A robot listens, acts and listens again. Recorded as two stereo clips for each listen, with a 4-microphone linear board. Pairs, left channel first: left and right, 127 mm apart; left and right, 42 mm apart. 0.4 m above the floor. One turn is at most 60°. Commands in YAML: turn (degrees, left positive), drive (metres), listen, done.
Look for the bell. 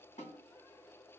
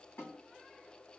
listen: true
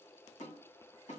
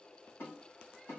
listen: true
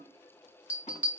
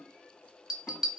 turn: -30
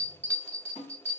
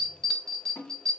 turn: 15
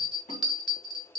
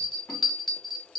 done: "Found it: a bell, straight ahead."